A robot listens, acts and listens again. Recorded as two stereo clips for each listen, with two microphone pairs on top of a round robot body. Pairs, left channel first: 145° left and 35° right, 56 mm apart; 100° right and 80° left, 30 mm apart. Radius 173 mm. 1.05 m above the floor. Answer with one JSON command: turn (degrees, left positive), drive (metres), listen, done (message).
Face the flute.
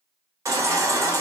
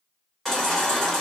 {"listen": true}
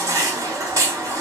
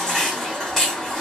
{"listen": true}
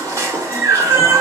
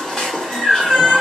{"done": "I can't make out a flute to turn to."}